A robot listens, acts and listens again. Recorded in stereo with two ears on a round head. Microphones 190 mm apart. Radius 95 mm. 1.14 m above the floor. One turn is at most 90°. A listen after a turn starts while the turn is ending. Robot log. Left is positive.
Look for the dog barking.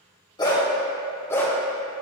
cmd yaw +30
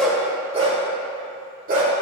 note: So it is at 45° right.
cmd yaw -45
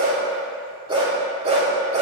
note: The dog barking is now 35° right.
cmd yaw -35
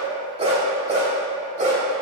note: The dog barking is now 35° right.
cmd yaw -35
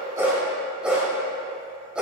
end: Found it: a dog barking, straight ahead, 1 to 2 m away.